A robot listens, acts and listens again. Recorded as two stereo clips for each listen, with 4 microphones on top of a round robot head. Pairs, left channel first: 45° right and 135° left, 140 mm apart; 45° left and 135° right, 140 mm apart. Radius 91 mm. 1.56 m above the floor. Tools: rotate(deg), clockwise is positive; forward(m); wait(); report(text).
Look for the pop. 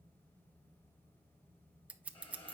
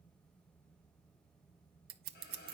wait()
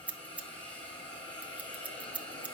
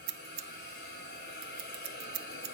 wait()
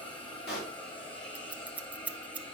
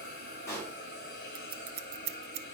rotate(30)
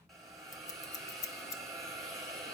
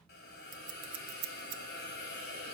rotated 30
report("I heard a pop from this way, but can't make it out now.")